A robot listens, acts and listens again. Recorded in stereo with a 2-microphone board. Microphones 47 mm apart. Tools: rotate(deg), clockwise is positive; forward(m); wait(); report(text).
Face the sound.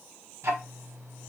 rotate(65)
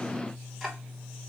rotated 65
report("Found it: ticking, straight ahead, under 1 m away.")